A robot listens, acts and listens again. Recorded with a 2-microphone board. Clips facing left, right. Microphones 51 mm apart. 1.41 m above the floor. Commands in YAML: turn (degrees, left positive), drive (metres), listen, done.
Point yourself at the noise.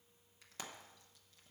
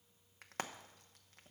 turn: -55
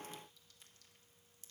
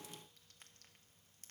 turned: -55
listen: true
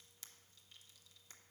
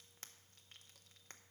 turn: -60
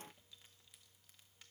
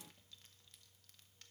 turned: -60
listen: true
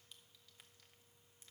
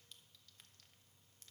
listen: true
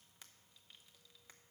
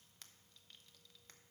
done: "Facing where the frying came from. I can't hear it now."